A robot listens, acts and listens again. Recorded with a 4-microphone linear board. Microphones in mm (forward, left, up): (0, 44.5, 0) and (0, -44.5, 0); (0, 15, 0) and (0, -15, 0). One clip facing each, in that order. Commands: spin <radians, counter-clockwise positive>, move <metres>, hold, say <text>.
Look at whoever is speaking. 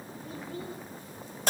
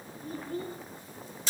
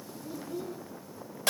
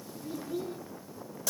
spin -0.87
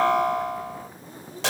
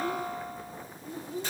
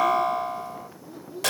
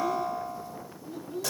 spin -1.48
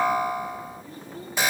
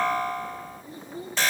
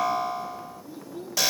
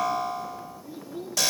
spin -0.35
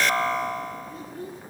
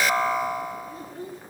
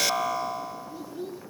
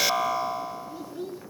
say Found it: a child speaking, straight ahead, 2 to 4 m away.